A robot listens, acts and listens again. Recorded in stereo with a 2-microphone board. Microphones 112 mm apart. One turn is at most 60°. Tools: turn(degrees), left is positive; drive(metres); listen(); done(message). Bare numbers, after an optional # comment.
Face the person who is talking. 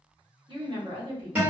# The woman speaking: about 50° right or 130° right.
turn(-50)
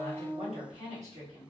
# So it is at 80° right.
turn(-60)
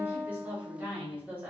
# The woman speaking is now 15° right.
turn(-15)
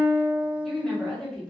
done("Facing the woman speaking.")